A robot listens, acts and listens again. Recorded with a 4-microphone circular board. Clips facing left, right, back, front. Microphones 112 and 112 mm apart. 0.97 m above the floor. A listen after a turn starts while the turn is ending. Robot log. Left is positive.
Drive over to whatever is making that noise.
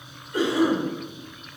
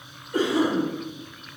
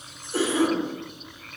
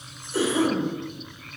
note: The cough: 140° right.
cmd yaw -140
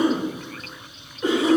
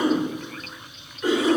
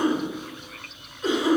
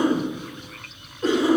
note: The cough is now 25° left.
cmd yaw +25
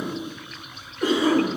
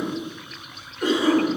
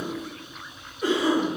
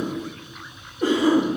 cmd fwd 1.0
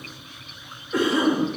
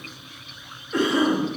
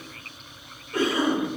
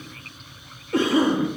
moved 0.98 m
cmd fwd 1.0
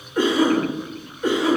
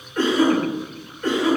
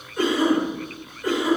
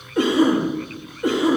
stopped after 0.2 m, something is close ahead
note: The cough is now 15° left.
cmd yaw +15
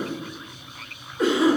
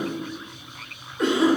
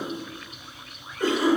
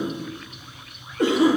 end: Arrived at the cough, straight ahead.